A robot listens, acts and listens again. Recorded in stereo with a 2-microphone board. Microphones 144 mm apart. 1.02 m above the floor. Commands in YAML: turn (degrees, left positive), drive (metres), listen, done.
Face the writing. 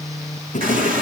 turn: 55
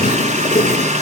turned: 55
turn: 60
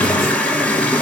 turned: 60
listen: true
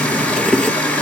done: "Facing the writing, 1 to 2 m away."